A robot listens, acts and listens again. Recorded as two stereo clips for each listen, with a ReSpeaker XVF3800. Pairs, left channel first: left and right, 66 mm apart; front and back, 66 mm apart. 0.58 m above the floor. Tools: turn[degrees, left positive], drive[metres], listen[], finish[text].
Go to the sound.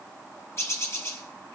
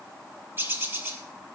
Thought: The bird: 130° left.
Action: turn[130]
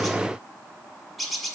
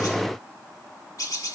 Action: drive[1.0]
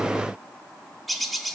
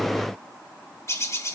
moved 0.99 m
Action: drive[1.0]
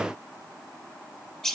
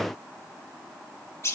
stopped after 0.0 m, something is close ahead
Thought: The bird is now 10° left.
Action: turn[10]
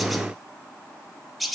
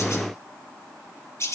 Action: finish[Arrived at the bird, straight ahead.]